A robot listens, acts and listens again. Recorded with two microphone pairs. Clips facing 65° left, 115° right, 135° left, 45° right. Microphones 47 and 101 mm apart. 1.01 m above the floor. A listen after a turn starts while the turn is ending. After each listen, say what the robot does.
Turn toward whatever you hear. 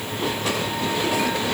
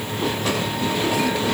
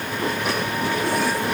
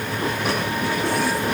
Keep listening.
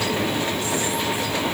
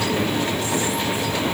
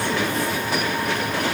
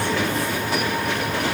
Keep listening.
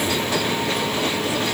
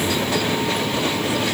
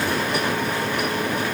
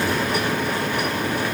I can't make out anything.